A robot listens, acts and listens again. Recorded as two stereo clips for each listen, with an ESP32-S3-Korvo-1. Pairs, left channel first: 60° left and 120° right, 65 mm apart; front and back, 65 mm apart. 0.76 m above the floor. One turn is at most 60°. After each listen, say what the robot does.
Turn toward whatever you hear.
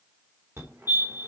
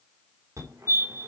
Turn 60° right.
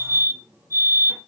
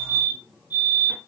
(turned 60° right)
Turn 60° right.
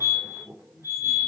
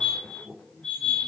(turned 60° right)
Turn 60° right.
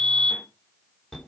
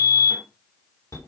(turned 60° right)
Turn 20° right.
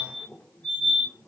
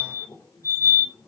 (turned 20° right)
Facing the fire alarm.